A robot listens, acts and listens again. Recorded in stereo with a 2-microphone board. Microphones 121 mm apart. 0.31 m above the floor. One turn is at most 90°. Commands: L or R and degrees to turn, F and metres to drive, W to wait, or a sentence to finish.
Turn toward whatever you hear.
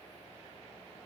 W
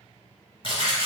L40
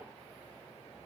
W
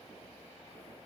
I heard a splash, but can't make it out now. It was about straight ahead or 100° left.